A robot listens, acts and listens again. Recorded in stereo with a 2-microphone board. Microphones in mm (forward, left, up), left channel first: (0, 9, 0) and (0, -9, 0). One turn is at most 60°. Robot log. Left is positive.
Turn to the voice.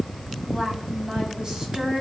note: The woman speaking: about 55° right or 125° right.
cmd yaw -55
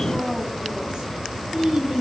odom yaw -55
note: So it is at 70° right.
cmd yaw -60
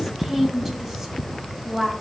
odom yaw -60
note: The woman speaking is now 10° right.
cmd yaw -10
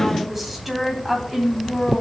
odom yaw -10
end: Facing the woman speaking.